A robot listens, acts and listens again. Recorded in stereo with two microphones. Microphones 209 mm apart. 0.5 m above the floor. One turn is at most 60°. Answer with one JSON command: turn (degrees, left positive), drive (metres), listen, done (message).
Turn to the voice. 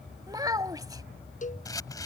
{"turn": -20}
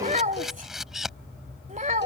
{"turn": -60}
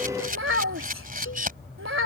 {"turn": -60}
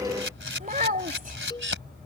{"turn": -40}
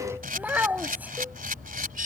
{"turn": -10}
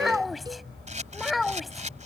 {"done": "Facing the child speaking."}